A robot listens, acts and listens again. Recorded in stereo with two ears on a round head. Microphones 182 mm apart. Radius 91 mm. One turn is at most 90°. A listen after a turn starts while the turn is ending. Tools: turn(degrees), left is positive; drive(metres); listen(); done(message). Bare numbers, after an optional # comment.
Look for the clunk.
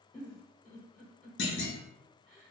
# The clunk: about 65° left or 115° left.
turn(65)
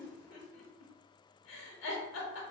listen()
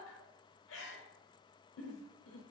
done("I heard a clunk, but can't make it out now. It was about straight ahead or 50° left.")